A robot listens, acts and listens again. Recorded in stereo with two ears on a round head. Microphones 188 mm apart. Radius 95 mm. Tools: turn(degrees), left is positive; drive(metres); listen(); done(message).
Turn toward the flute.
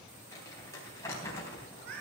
listen()
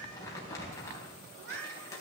listen()
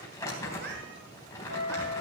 turn(degrees=-65)
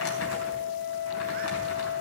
done("Found it: a flute, straight ahead, over 4 m away.")